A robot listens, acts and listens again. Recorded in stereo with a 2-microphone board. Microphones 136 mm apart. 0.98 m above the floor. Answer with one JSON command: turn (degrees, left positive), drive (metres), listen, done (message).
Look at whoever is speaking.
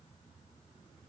{"listen": true}
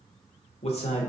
{"turn": 50}
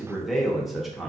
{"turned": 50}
{"done": "Found it: a man speaking, straight ahead."}